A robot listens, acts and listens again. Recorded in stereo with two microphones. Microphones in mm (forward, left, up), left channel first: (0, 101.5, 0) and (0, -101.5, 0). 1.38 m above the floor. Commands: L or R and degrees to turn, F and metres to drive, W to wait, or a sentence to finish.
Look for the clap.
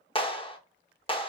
L25
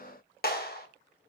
L130
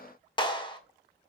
L25
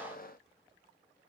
W
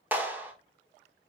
R10
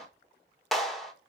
Found it: a clap, straight ahead, 1 to 2 m away.